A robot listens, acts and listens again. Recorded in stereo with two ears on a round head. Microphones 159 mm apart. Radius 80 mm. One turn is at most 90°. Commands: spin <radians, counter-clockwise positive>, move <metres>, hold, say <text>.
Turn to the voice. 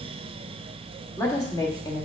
spin 0.44
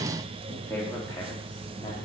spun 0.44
spin 0.26
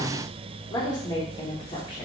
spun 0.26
spin 0.44
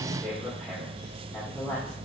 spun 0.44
spin 0.17
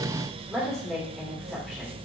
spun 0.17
say Facing the woman speaking.